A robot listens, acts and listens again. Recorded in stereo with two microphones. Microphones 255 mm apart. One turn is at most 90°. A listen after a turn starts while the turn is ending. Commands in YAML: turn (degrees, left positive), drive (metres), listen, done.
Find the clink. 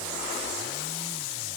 listen: true
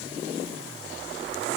listen: true
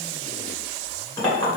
turn: 30
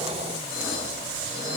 listen: true
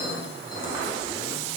listen: true
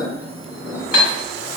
turn: -15
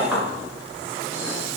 listen: true
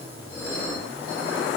done: "Facing the clink, 1 to 2 m away."